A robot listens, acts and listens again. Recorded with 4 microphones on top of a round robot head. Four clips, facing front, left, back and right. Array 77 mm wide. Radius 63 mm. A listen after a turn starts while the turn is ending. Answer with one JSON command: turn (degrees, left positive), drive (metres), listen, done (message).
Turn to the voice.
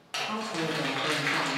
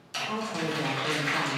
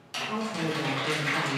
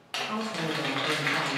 {"done": "Found it: a woman speaking, straight ahead."}